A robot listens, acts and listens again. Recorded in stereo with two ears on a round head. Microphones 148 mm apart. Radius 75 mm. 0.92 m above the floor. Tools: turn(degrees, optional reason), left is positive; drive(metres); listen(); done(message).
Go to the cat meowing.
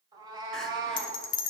turn(degrees=-25, reason="The cat meowing: about 25° right or 155° right.")
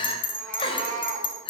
turn(degrees=-125, reason="So it is at 125° right.")
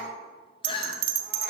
turn(degrees=-10, reason="The cat meowing is now 10° right.")
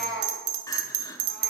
drive(metres=1.0)
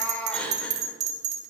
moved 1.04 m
turn(degrees=10, reason="The cat meowing is now 10° left.")
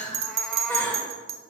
listen()
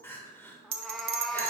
drive(metres=1.0)
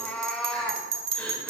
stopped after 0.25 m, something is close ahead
done("I am next to the cat meowing.")